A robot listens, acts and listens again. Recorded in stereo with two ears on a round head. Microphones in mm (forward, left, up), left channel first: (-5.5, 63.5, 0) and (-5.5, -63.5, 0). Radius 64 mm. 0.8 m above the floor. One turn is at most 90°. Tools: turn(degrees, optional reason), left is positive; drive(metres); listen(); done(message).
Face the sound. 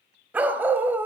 turn(degrees=-15, reason="The dog barking: about 15° right or 165° right.")
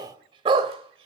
turn(degrees=-40, reason="The dog barking: about 40° right or 140° right.")
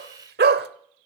turn(degrees=-90, reason="So it is at 100° right.")
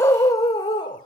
turn(degrees=30, reason="The dog barking is now 30° left.")
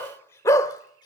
turn(degrees=25, reason="The dog barking is now 25° left.")
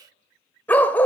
turn(degrees=10, reason="The dog barking is now 10° left.")
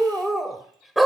done("Found it: a dog barking, straight ahead.")